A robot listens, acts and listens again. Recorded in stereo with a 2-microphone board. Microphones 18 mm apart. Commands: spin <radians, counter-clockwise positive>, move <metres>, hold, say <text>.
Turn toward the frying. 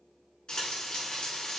spin 0.96
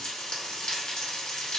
spin 1.13
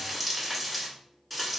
say Found it: frying, straight ahead, 1 to 2 m away.